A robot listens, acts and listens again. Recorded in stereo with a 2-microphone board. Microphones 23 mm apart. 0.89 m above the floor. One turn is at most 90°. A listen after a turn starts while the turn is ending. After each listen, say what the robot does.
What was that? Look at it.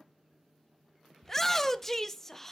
Turn 20° left.
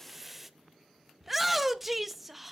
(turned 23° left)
Found it: a shout, straight ahead.